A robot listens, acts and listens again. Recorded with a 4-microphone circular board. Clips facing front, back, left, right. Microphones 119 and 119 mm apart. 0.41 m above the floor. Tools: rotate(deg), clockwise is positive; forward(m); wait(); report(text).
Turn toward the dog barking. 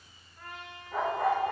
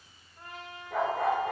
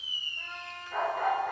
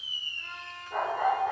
rotate(165)
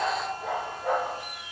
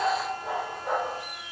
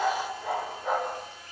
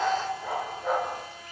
report("Facing the dog barking, 2 to 4 m away.")